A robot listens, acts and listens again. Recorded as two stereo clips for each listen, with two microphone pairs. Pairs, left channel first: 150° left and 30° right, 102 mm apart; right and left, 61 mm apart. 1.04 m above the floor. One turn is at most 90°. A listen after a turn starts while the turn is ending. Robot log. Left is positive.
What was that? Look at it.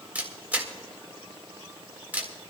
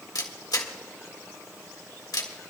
note: The camera shutter: 105° right.
cmd yaw -90
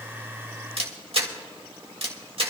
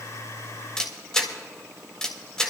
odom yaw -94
note: The camera shutter is now 10° right.
cmd yaw -10
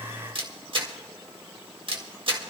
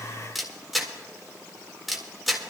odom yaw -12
end: Found it: a camera shutter, straight ahead, 1 to 2 m away.